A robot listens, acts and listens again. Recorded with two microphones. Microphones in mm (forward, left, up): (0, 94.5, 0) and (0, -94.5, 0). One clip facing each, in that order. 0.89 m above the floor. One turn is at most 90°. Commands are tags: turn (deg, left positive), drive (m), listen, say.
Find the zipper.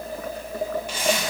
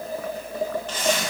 <turn deg="30"/>
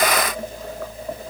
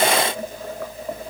<listen/>
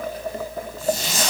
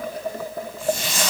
<turn deg="90"/>
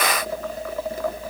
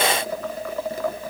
<turn deg="50"/>
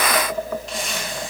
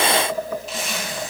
<say>Found it: a zipper, straight ahead.</say>